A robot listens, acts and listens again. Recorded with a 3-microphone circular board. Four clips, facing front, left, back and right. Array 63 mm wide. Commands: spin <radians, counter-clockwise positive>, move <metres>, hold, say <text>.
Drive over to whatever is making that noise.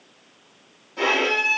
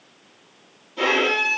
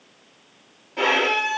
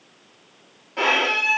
spin -1.92
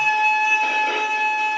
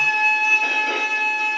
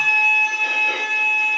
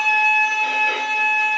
spin 0.26
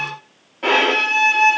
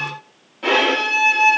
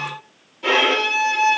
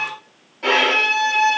move 1.0
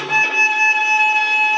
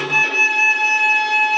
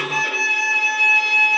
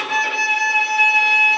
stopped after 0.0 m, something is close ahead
spin -0.17
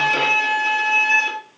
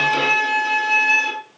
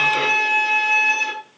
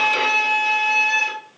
say Something is in my way. I am facing the violin but have not reached it.